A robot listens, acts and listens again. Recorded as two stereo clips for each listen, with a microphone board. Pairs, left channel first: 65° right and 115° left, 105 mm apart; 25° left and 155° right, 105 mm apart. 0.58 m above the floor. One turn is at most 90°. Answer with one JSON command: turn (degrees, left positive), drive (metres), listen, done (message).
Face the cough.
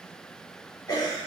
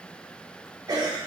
{"turn": -90}
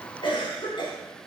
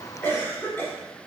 {"turn": -45}
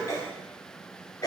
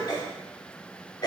{"turn": -20}
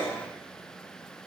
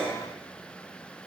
{"done": "Facing the cough, 1 to 2 m away."}